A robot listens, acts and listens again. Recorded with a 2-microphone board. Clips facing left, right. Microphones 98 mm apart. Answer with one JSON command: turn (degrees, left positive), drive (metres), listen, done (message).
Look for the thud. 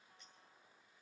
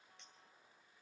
{"listen": true}
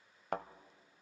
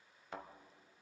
{"turn": 60}
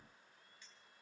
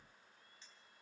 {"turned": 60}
{"listen": true}
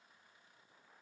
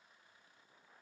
{"done": "I heard a thud, but can't make it out now. It was about straight ahead or 60° left."}